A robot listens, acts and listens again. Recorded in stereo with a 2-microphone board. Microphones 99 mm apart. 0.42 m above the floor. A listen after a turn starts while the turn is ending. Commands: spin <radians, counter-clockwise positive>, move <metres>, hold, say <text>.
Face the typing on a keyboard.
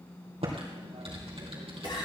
spin -1.57
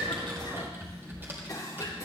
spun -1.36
spin -0.35
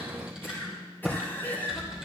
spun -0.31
say Facing the typing on a keyboard, 2 to 4 m away.